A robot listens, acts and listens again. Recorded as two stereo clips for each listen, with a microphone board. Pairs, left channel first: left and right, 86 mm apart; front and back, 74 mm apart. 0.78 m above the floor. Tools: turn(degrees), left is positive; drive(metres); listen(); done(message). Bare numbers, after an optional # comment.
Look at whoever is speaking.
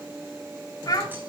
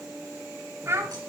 # The child speaking: 130° left.
turn(130)
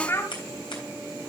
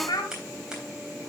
# The child speaking is now 30° left.
turn(30)
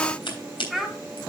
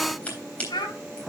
done("Found it: a child speaking, straight ahead, 2 to 4 m away.")